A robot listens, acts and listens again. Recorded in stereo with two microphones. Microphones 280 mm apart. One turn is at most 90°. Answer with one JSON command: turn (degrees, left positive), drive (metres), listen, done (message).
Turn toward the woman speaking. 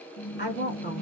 {"turn": 40}
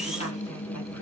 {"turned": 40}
{"listen": true}
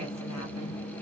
{"listen": true}
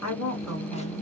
{"turn": 90}
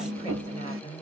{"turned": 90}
{"turn": 25}
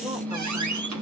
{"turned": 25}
{"listen": true}
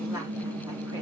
{"listen": true}
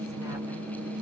{"done": "Facing where the woman speaking came from. I can't hear it now."}